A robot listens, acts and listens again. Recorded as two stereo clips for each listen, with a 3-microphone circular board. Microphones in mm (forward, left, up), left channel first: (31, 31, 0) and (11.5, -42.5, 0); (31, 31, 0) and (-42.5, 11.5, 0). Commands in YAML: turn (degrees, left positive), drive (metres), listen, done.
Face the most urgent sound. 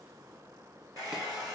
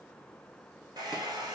listen: true
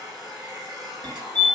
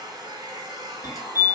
turn: -105
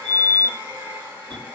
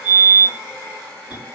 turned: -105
done: "Found it: a fire alarm, straight ahead."